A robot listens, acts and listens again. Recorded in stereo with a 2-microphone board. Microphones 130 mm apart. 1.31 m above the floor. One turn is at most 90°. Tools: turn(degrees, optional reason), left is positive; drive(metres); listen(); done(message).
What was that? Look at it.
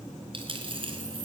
turn(degrees=-45, reason="The dropped coin: about 45° right or 135° right.")
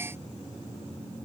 listen()
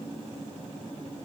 done("I heard a dropped coin, but can't make it out now. It was about straight ahead or 90° right.")